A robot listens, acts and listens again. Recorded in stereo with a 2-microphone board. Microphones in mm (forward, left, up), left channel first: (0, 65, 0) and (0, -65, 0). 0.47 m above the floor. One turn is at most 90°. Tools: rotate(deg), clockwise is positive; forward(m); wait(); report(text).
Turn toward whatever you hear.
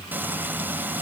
rotate(30)
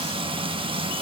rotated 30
rotate(90)
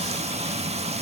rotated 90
rotate(55)
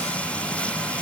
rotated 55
rotate(-10)
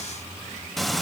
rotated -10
report("Found it: frying, straight ahead.")